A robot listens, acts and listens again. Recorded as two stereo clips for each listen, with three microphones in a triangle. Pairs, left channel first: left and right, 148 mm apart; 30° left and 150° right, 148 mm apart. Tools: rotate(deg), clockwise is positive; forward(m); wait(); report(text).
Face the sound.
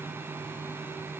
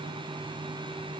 wait()
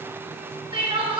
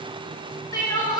rotate(35)
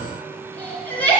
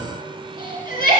rotate(-10)
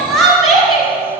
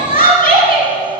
report("Facing the crying.")